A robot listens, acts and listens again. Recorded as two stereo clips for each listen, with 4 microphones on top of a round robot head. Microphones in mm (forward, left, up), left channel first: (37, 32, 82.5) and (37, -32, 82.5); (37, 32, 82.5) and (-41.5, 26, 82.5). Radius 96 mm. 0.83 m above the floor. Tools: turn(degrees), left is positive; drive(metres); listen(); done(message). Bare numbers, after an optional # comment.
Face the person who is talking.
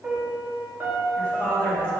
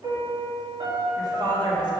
# The woman speaking: 165° left.
turn(165)
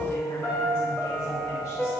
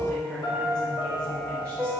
listen()
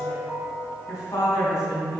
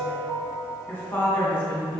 # The woman speaking is now 55° left.
turn(55)
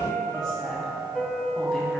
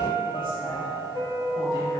listen()
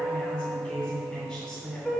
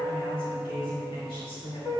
done("Facing the woman speaking, 2 to 4 m away.")